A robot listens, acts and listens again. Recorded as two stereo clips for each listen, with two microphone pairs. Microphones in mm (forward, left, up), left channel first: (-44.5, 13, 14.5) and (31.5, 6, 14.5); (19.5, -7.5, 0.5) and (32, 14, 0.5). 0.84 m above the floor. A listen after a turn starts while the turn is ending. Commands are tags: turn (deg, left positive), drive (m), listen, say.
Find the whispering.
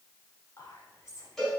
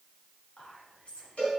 <turn deg="-140"/>
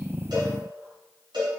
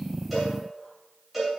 <listen/>
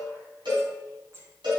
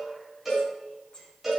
<turn deg="-60"/>
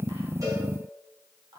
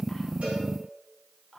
<say>Facing the whispering.</say>